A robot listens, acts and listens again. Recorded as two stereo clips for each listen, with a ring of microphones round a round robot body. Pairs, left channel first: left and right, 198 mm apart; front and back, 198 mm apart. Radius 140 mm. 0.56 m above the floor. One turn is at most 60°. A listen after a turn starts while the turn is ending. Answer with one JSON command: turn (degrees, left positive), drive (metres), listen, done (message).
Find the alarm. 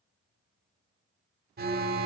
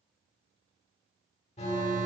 {"turn": -60}
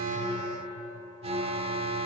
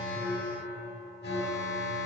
{"turn": -35}
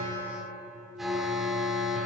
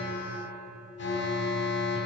{"done": "Found it: an alarm, straight ahead, 1 to 2 m away."}